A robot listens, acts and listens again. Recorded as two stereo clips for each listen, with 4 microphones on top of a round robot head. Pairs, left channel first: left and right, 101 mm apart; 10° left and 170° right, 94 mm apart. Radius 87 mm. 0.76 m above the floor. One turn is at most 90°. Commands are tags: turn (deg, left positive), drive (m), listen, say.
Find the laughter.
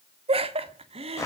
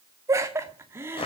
<turn deg="-90"/>
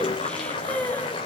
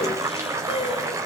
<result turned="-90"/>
<turn deg="15"/>
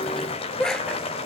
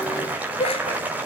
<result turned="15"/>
<say>Facing the laughter, 2 to 4 m away.</say>